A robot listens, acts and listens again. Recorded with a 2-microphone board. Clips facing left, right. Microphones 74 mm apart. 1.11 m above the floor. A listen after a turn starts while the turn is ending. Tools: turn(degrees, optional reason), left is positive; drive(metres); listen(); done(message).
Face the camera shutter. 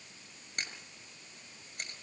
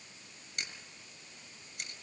turn(degrees=40, reason="The camera shutter: about 40° left or 140° left.")
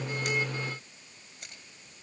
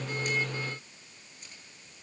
turn(degrees=100, reason="So it is at 100° left.")
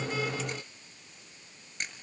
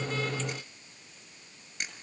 done("Found it: a camera shutter, straight ahead.")